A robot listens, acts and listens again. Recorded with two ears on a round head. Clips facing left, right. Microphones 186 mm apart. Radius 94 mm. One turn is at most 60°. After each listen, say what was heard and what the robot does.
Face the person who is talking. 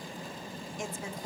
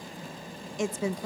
The woman speaking: about 55° right or 125° right. Turn 55° right.
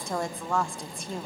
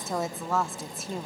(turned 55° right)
Found it: a woman speaking, straight ahead.